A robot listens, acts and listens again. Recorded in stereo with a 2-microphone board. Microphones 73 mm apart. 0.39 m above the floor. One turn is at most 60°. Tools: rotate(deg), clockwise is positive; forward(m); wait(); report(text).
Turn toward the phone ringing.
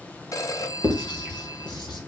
rotate(-50)
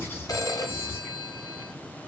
rotate(-60)
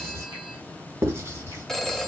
rotate(-10)
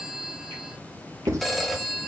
report("Found it: a phone ringing, straight ahead.")